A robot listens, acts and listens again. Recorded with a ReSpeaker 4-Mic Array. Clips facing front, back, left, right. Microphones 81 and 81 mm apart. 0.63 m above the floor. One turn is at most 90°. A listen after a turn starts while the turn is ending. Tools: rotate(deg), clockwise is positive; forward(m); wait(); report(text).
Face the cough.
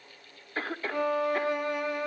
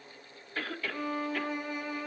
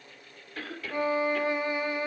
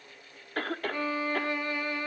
rotate(55)
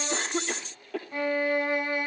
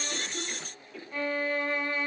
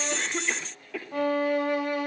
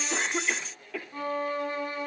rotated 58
report("Found it: a cough, straight ahead, 1 to 2 m away.")